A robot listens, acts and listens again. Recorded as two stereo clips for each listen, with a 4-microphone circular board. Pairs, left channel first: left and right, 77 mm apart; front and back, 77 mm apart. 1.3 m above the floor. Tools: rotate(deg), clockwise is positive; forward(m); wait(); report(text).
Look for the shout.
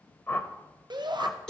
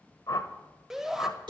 rotate(95)
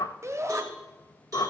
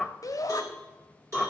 rotate(40)
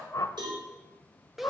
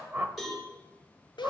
report("Found it: a shout, straight ahead.")